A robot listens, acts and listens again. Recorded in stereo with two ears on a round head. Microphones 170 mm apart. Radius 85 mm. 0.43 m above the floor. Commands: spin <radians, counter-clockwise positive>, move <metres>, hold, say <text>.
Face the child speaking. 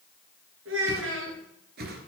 spin -1.22
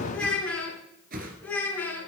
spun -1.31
spin 0.17
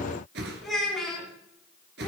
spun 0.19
say Found it: a child speaking, straight ahead, 2 to 4 m away.